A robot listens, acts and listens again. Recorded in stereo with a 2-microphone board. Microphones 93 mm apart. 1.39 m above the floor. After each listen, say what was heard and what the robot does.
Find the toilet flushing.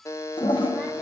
The toilet flushing: about 60° left or 120° left. Turn 60° left.
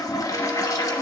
So it is at 45° left. Turn 45° left.
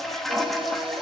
Found it: a toilet flushing, straight ahead, 1 to 2 m away.